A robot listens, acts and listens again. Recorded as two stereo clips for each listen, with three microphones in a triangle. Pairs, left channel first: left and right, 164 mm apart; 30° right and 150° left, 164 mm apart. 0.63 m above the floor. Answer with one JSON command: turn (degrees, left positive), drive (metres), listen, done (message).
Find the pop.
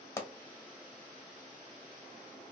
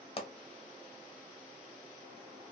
{"turn": 15}
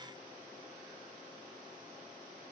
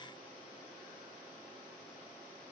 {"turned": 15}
{"done": "I heard a pop from this way, but can't make it out now."}